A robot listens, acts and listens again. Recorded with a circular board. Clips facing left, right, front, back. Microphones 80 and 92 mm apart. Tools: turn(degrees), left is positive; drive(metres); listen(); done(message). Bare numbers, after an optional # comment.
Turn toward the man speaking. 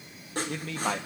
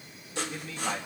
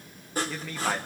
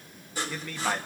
# The man speaking: 85° left.
turn(85)
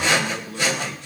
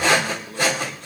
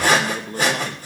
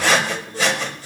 done("Facing the man speaking.")